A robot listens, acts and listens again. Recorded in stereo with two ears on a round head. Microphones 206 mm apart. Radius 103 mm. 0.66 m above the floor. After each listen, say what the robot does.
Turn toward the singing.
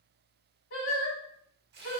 Turn 45° left.
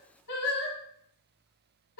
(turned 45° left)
Turn 90° left.
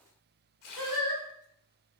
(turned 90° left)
Facing the singing, 1 to 2 m away.